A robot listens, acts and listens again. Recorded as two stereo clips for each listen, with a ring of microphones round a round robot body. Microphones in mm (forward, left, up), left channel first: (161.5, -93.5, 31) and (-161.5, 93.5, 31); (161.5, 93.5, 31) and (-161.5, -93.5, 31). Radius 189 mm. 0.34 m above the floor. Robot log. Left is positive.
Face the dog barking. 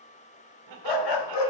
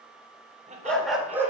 note: The dog barking: 65° right.
cmd yaw -65
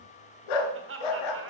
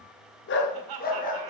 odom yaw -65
note: The dog barking is now 40° right.
cmd yaw -40
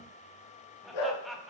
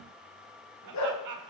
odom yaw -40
note: The dog barking is now 20° right.
cmd yaw -20
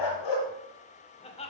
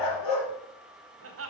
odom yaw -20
end: Found it: a dog barking, straight ahead.